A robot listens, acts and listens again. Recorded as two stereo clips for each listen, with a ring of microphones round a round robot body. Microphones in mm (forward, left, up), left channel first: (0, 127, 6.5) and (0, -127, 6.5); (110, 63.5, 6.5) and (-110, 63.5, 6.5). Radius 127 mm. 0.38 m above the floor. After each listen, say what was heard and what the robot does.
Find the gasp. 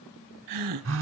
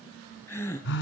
The gasp: 80° right. Turn 80° right.
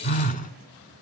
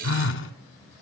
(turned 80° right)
Facing where the gasp came from. I can't hear it now.